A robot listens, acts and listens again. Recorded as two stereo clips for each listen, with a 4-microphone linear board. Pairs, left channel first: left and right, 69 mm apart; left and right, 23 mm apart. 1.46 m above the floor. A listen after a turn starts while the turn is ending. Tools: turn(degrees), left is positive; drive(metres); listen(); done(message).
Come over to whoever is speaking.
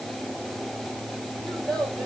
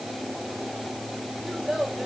turn(degrees=30)
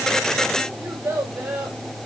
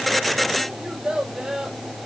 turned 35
turn(degrees=-25)
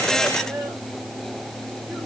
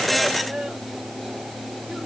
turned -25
drive(metres=1.0)
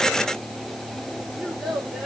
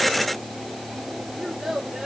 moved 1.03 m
drive(metres=1.0)
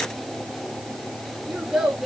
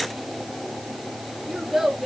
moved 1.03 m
turn(degrees=-10)
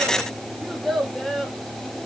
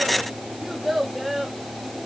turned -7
drive(metres=1.0)
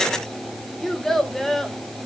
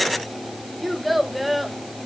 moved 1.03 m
drive(metres=1.0)
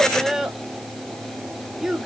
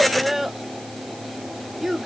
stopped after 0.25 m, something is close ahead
done("I am next to the child speaking.")